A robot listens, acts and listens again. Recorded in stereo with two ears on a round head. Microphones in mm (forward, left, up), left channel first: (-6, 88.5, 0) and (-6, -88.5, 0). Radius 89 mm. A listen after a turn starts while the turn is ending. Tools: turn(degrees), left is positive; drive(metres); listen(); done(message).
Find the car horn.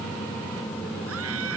listen()
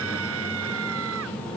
listen()
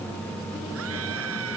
done("I can't make out a car horn.")